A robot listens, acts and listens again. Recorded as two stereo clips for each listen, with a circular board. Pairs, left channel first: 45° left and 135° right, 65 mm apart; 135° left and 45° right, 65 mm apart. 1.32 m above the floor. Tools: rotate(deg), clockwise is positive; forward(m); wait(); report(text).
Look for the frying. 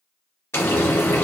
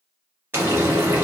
report("Facing the frying.")